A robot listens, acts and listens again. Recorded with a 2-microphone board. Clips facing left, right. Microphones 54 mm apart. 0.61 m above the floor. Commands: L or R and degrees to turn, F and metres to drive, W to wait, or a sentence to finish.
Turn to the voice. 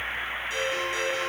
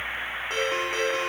W
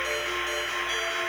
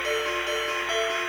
W
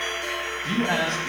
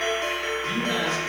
L60
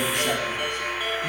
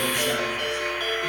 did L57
W
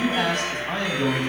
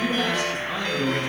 L55
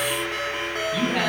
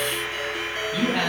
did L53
Found it: a man speaking, straight ahead, over 4 m away.